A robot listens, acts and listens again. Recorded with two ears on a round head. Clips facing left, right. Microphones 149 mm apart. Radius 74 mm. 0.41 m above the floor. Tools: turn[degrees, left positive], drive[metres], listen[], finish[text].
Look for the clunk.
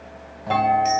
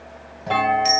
Action: turn[30]
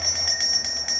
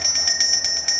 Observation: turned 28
Action: listen[]
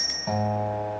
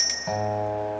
Action: finish[I heard a clunk, but can't make it out now. It was about 25° right or 150° left.]